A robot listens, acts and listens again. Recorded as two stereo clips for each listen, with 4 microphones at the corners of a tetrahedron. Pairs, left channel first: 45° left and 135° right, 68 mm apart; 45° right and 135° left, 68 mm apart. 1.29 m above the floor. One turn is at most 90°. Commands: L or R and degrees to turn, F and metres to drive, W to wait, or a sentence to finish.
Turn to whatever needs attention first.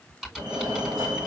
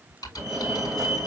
R90
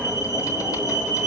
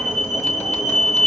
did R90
R75
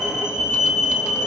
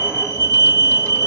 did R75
Facing the fire alarm.